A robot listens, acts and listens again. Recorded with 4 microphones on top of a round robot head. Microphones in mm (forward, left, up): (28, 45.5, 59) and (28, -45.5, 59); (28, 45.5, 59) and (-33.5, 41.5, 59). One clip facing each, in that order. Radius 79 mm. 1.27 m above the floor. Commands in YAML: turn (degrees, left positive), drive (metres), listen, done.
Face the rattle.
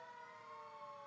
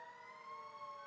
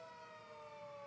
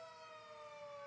listen: true
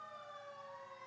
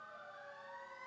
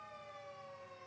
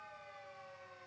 listen: true
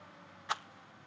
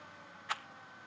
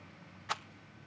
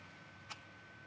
turn: 20
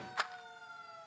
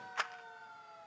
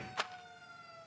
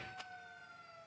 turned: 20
done: "Found it: a rattle, straight ahead."